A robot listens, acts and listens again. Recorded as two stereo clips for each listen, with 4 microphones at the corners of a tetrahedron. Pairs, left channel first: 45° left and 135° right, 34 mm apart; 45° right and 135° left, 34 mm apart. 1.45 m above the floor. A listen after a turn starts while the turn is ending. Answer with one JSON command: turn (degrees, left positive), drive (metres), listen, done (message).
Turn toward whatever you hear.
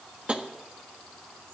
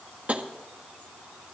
{"turn": 175}
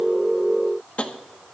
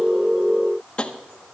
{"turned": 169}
{"done": "Facing the tapping."}